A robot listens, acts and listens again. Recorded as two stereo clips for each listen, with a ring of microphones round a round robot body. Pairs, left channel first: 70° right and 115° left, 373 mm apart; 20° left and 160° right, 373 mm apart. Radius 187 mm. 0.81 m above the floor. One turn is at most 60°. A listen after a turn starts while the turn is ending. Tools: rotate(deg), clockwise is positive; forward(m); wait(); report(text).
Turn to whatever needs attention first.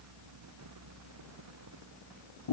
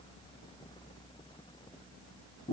wait()
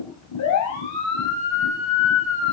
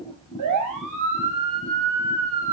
rotate(60)
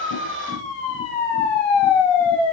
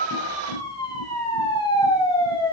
rotate(55)
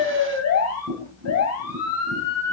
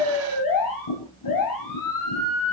rotate(15)
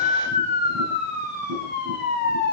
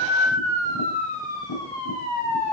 report("Facing the siren.")